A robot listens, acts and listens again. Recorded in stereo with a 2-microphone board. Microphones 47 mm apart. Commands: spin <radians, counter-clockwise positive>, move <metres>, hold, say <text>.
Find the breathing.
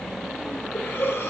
spin 0.96
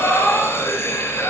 spin 1.22
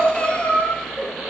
spin 0.35
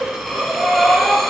say Facing the breathing.